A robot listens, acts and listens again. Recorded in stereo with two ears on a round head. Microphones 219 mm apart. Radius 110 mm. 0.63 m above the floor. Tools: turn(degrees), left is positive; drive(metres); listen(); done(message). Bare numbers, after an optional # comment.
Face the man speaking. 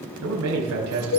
# The man speaking: about 70° right or 110° right.
turn(-70)
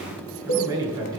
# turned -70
# So it is at 15° right.
turn(-15)
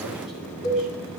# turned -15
listen()
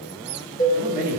# The man speaking is now 10° right.
turn(-10)
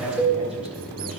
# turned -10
done("Found it: a man speaking, straight ahead, over 4 m away.")